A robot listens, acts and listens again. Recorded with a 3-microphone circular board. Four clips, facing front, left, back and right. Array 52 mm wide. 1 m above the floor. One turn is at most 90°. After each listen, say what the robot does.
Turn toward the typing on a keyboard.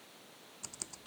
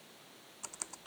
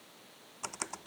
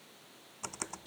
Turn 90° right.
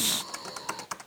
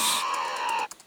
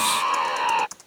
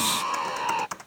Turn 60° right.
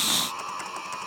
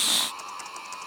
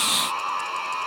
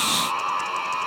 Keep listening.
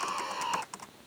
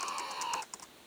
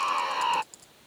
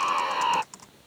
Found it: typing on a keyboard, straight ahead.